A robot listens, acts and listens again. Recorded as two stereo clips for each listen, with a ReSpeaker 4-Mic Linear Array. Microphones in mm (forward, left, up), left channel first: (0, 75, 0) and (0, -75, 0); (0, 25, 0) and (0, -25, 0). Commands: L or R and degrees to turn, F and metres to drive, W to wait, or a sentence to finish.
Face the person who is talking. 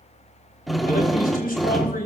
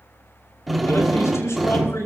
L75
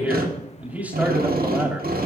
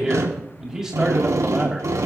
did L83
R10
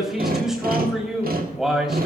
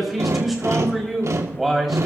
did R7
Facing the man speaking.